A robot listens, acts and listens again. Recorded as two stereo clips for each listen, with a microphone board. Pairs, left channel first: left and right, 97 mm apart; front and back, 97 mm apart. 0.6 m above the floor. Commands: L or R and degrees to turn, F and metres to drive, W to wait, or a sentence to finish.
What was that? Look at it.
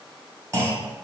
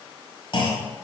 R35
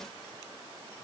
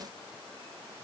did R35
I heard a clunk from this way, but can't make it out now.